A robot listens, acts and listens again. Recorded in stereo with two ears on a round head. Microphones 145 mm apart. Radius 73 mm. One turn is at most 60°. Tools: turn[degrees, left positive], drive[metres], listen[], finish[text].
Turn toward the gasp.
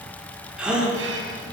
Action: turn[-30]
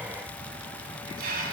Action: listen[]
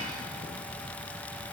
Action: finish[I heard a gasp, but can't make it out now. It was about 25° left or 145° right.]